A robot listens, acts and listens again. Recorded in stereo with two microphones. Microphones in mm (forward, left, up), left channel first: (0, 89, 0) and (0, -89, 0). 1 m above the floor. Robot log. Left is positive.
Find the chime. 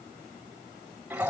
cmd idle
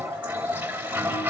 cmd idle
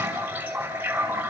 end: I can't make out a chime to turn to.